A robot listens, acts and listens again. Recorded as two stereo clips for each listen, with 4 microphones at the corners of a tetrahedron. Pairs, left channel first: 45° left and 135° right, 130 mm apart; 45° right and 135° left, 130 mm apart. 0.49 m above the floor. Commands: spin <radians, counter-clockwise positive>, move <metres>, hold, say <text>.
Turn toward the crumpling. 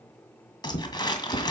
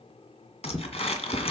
spin -0.17
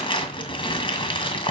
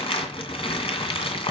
say Found it: crumpling, straight ahead, 2 to 4 m away.